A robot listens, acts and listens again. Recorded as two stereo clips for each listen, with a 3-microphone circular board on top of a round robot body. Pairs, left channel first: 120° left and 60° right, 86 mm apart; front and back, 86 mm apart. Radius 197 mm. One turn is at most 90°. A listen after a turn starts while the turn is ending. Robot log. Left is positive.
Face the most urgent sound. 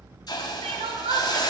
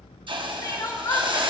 note: The crying: 55° right.
cmd yaw -55
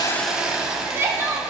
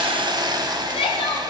end: Found it: crying, straight ahead.